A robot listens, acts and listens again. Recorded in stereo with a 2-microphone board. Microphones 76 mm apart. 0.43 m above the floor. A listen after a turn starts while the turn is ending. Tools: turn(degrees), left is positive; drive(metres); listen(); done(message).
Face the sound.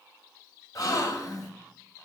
turn(degrees=55)
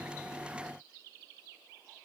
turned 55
listen()
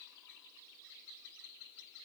done("I heard a gasp, but can't make it out now. It was about straight ahead or 70° left.")